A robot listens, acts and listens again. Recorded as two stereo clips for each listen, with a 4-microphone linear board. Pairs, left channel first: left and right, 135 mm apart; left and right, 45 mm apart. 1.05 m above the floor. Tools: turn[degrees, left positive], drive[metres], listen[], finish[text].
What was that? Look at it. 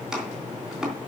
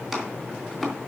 Action: turn[-30]
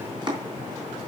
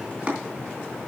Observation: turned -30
Thought: So it is at 145° right.
Action: turn[-145]
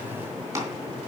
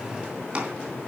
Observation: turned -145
Thought: The chopping is now 25° right.
Action: turn[-25]
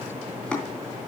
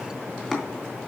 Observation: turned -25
Thought: The chopping is now 10° left.
Action: turn[10]
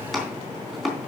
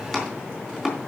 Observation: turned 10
Action: finish[Facing the chopping, 2 to 4 m away.]